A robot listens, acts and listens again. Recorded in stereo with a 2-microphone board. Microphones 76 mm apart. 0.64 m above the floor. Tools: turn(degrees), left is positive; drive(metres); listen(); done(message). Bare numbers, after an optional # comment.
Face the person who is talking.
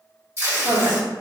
# The woman speaking: about 45° right or 135° right.
turn(-45)
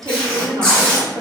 # So it is at 75° right.
turn(-75)
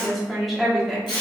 done("Facing the woman speaking, under 1 m away.")